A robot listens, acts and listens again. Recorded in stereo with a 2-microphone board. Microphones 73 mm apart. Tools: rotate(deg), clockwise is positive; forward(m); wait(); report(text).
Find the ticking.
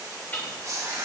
rotate(-25)
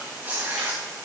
wait()
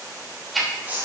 report("Found it: ticking, straight ahead, 2 to 4 m away.")